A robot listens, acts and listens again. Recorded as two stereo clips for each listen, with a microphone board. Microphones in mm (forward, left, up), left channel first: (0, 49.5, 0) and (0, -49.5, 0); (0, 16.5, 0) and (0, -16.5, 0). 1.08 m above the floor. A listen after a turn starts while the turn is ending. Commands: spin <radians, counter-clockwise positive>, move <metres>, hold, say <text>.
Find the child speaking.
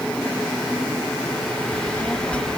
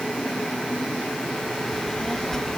spin 0.52
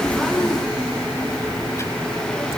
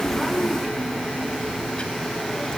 spin 2.62
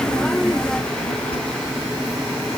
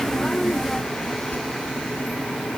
spin 1.31
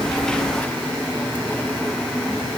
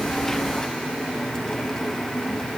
hold
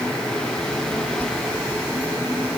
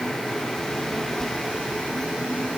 spin 0.26
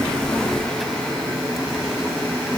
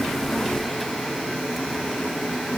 hold
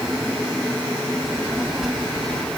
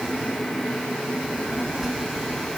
say Found it: a child speaking, straight ahead.